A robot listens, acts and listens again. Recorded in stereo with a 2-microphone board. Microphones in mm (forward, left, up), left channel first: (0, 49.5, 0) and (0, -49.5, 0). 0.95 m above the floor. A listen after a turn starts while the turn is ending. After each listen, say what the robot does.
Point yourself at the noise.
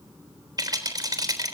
Turn 40° right.
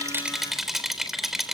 Facing the rattle, 2 to 4 m away.